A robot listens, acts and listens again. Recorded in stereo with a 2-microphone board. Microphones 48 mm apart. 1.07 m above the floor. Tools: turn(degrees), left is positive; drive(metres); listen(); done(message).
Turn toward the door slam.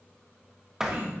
turn(degrees=-30)
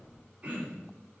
listen()
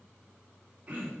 done("I heard a door slam, but can't make it out now. It was about 20° left or 140° right.")